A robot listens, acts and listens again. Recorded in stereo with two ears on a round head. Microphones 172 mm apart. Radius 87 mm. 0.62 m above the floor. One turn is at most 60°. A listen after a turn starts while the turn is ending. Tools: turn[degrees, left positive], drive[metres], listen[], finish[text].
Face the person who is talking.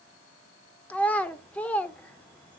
Action: turn[30]
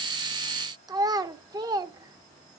Thought: So it is at 20° right.
Action: turn[-20]
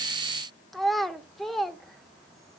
Action: finish[Found it: a child speaking, straight ahead, under 1 m away.]